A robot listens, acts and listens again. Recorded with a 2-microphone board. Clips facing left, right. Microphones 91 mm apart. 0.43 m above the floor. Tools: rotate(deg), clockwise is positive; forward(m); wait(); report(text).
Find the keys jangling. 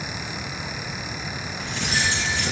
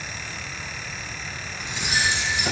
rotate(15)
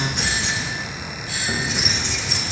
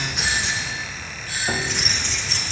rotate(-10)
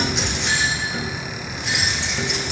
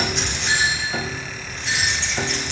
rotate(-15)
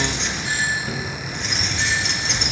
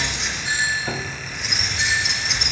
report("Facing the keys jangling, 2 to 4 m away.")